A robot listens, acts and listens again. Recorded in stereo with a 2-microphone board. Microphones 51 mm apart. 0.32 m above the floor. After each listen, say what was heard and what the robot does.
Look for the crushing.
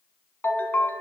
Keep listening.
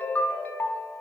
Keep listening.
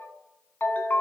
I can't make out crushing to turn to.